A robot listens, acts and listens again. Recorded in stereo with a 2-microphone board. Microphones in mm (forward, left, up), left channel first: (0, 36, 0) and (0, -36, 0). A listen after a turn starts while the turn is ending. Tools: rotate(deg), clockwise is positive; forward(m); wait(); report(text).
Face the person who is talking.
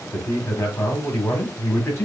rotate(-40)
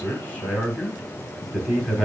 rotate(-10)
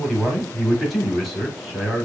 report("Facing the man speaking.")